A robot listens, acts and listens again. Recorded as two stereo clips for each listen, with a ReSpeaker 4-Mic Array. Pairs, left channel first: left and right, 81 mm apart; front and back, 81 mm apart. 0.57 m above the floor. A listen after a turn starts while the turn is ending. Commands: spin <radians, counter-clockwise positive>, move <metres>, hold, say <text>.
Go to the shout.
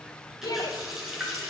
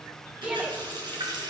spin 1.92
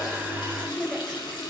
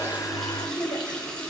move 1.0
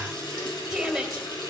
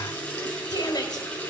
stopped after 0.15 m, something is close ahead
say Something is in my way. I am facing the shout but have not reached it.